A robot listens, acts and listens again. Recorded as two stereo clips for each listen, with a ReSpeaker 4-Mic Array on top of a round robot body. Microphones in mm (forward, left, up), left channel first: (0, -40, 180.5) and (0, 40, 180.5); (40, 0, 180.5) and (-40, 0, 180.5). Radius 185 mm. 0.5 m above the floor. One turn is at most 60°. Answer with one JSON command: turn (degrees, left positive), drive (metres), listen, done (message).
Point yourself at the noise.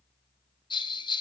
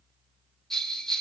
{"turn": -60}
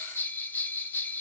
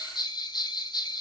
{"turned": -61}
{"turn": -20}
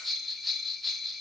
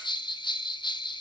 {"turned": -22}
{"done": "Facing the bell, 1 to 2 m away."}